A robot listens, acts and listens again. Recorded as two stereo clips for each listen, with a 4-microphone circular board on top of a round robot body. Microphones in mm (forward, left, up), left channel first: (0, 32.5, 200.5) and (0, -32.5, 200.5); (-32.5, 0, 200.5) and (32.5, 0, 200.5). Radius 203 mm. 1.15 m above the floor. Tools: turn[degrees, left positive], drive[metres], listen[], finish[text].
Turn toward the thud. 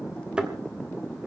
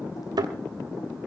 Thought: The thud: 15° right.
Action: turn[-15]
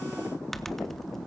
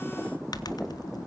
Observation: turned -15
Action: finish[Facing where the thud came from. I can't hear it now.]